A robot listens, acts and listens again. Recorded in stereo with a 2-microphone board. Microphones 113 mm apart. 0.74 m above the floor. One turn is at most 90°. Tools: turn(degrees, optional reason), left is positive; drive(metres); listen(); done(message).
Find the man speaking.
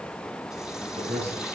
turn(degrees=-65, reason="The man speaking: about 65° right or 115° right.")
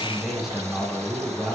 done("Found it: a man speaking, straight ahead, over 4 m away.")